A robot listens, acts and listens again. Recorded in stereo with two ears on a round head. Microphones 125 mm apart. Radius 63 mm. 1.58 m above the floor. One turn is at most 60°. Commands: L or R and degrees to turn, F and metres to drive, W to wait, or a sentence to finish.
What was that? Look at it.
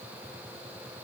W
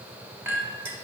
R15
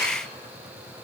W
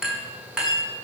Facing the clink, 1 to 2 m away.